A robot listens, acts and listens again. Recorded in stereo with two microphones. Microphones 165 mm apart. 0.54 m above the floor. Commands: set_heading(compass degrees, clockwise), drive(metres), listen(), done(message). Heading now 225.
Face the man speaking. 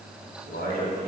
set_heading(135)
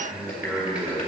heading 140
done("Found it: a man speaking, straight ahead, 2 to 4 m away.")